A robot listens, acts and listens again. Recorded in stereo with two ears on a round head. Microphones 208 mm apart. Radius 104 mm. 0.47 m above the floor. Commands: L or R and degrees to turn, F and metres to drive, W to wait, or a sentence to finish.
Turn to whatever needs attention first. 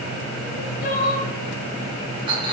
L35
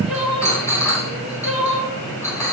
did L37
Found it: crying, straight ahead, 1 to 2 m away.